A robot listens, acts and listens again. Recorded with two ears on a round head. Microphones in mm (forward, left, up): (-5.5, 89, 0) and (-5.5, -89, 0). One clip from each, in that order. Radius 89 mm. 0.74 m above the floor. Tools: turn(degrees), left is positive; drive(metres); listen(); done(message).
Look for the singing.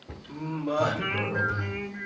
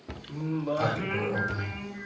turn(degrees=20)
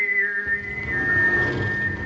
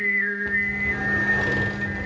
turn(degrees=-20)
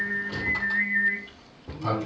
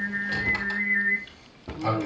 turn(degrees=-20)
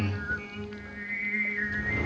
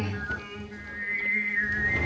turn(degrees=-15)
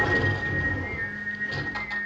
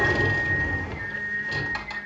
done("Found it: singing, straight ahead.")